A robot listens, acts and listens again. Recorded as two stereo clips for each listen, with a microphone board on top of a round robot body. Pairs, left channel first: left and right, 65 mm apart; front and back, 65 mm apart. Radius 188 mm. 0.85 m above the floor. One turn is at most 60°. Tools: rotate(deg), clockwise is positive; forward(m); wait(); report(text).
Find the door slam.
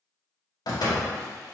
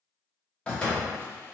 rotate(-60)
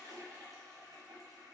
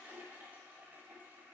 rotate(-10)
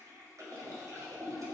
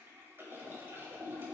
report("Facing where the door slam came from. I can't hear it now.")